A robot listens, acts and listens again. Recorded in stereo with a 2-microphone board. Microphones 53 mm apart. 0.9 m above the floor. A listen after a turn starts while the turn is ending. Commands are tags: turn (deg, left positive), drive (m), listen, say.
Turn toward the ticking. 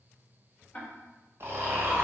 <turn deg="25"/>
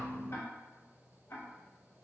<turn deg="125"/>
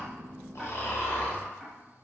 <listen/>
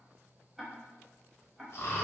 <say>Facing the ticking, 1 to 2 m away.</say>